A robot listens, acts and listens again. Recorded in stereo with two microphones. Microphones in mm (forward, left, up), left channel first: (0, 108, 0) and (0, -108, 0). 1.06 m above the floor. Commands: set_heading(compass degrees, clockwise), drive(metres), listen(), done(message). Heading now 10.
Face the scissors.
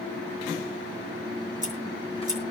set_heading(45)
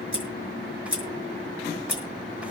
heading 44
set_heading(154)
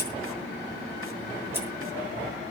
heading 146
set_heading(156)
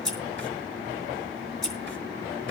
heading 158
done("Facing the scissors, over 4 m away.")